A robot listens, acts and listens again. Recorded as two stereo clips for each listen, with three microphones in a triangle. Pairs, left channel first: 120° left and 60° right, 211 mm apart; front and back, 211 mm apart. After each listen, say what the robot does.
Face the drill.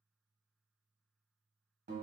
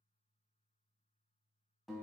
Keep listening.
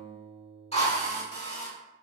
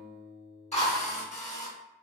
Turn 60° left.
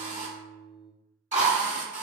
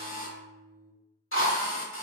Found it: a drill, straight ahead, 1 to 2 m away.